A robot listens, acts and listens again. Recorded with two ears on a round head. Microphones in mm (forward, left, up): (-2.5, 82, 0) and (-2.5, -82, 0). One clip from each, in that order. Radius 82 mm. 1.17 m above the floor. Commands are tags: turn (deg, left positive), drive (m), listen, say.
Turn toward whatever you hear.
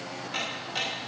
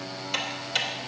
<turn deg="-60"/>
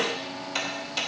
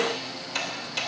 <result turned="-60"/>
<say>Found it: ticking, straight ahead.</say>